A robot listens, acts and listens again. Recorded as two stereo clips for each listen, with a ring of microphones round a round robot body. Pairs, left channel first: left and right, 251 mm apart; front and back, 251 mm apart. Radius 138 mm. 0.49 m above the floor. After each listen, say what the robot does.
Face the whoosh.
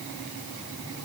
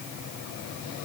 Keep listening.
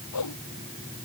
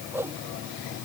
Turn 100° left.
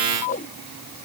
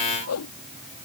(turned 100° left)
Turn 25° left.
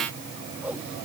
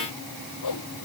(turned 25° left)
Facing the whoosh.